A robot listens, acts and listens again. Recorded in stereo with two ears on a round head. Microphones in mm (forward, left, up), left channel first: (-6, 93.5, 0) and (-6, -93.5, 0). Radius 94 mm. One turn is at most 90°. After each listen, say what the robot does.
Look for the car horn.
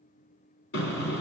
Turn 60° left.
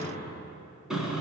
Found it: a car horn, straight ahead, 2 to 4 m away.